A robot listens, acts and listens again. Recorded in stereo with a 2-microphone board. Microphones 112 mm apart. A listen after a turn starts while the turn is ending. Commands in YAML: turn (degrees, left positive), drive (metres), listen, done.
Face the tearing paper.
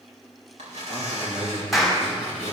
turn: -90
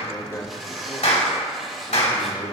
done: "Facing the tearing paper."